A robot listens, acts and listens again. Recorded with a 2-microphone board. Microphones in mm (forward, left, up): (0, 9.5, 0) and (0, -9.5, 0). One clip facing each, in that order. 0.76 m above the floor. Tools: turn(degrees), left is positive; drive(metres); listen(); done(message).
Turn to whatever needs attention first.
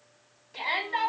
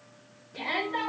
turn(degrees=90)
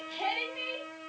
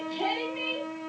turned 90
turn(degrees=10)
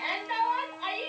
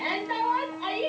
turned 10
done("Facing the shout.")